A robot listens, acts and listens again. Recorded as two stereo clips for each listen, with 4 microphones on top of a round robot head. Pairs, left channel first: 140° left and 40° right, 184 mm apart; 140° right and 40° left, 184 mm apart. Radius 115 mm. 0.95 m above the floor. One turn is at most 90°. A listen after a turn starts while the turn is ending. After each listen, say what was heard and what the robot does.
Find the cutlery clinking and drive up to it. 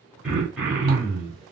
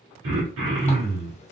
Keep listening.
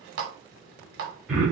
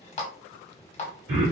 Keep listening.
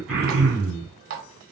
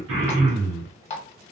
I can't make out cutlery clinking, only a running tap and throat clearing.